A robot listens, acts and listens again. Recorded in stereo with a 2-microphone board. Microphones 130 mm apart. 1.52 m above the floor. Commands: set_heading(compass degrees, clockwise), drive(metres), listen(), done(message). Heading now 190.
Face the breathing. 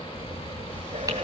set_heading(245)
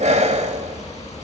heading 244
set_heading(309)
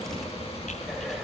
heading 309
done("Facing the breathing.")